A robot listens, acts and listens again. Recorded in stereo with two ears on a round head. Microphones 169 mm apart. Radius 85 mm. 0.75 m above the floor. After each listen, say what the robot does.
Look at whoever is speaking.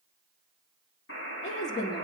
Turn 40° left.
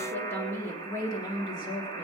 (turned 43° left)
Turn 25° left.
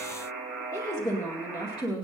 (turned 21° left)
Turn 25° left.
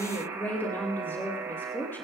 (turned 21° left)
Turn 10° left.
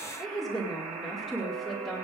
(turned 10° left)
Facing the woman speaking.